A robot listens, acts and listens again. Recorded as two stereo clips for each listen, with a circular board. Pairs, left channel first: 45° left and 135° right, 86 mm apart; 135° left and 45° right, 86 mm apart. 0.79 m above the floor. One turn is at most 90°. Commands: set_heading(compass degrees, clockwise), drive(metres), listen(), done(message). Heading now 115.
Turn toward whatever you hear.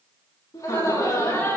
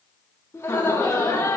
set_heading(25)
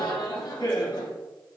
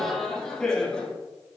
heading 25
set_heading(325)
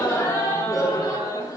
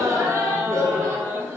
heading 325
set_heading(310)
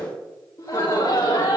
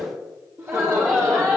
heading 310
set_heading(295)
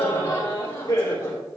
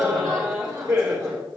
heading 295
done("Facing the laughter, 2 to 4 m away.")